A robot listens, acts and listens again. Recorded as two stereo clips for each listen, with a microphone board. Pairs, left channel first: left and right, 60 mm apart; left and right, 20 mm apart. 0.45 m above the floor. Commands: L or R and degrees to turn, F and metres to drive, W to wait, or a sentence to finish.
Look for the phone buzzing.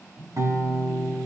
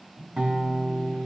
R40
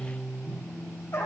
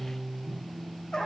R95
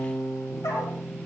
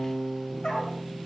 W
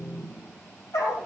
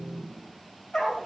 R25
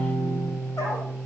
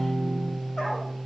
W
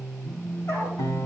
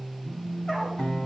Found it: a phone buzzing, straight ahead.